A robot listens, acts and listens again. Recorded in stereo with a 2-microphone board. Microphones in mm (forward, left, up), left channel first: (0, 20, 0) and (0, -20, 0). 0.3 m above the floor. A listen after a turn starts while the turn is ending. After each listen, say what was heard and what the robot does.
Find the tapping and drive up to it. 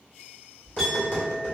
The tapping: about 55° left or 125° left. Turn 55° left.
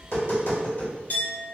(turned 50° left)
So it is at 70° left. Turn 70° left.
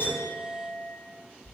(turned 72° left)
Keep listening.
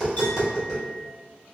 Drive 1.0 m forward.
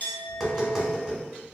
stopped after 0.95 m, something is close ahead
I am next to the tapping.